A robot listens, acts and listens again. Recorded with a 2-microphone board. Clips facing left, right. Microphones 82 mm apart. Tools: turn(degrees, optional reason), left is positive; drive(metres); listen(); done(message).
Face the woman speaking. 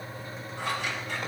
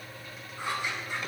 listen()
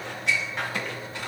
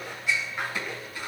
listen()
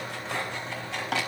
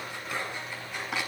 done("I can't make out a woman speaking to turn to.")